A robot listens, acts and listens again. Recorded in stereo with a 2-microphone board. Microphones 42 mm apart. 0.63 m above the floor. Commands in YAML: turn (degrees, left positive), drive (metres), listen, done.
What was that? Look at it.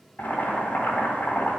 turn: 45
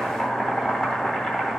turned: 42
done: "Found it: boiling, straight ahead, 1 to 2 m away."